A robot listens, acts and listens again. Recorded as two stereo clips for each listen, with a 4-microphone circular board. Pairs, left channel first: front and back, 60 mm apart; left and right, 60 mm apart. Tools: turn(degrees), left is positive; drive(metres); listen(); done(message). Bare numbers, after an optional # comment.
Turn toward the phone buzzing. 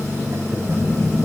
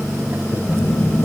# The phone buzzing: 85° left.
turn(85)
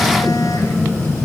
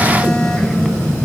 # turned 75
# The phone buzzing is now 15° left.
turn(15)
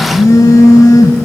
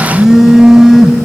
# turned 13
done("Found it: a phone buzzing, straight ahead.")